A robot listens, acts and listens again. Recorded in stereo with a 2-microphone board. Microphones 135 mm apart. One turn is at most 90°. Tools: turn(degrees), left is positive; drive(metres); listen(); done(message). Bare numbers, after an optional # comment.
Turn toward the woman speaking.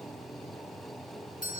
listen()
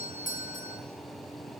listen()
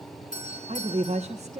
# The woman speaking: about 65° right or 115° right.
turn(-65)
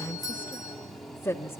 # So it is at 20° left.
turn(20)
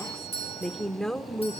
done("Facing the woman speaking, 1 to 2 m away.")